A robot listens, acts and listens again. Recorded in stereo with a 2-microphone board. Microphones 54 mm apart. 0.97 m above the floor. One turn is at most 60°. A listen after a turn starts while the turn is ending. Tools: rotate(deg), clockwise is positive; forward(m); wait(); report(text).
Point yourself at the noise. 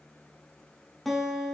rotate(-30)
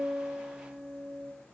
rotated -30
rotate(30)
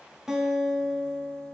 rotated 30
report("Facing the guitar, under 1 m away.")